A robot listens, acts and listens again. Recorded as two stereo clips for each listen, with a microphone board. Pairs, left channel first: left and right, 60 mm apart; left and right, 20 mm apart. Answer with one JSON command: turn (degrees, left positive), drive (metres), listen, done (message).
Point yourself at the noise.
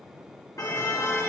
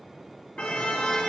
{"turn": 90}
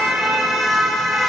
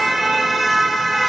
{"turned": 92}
{"done": "Facing the car horn."}